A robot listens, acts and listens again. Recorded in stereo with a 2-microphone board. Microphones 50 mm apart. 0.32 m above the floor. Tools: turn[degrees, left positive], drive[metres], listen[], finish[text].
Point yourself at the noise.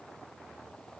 Action: listen[]
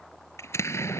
Thought: The explosion: about 65° left or 115° left.
Action: turn[65]
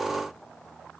Action: listen[]
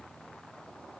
Action: finish[I heard an explosion, but can't make it out now. It was about straight ahead or 50° left.]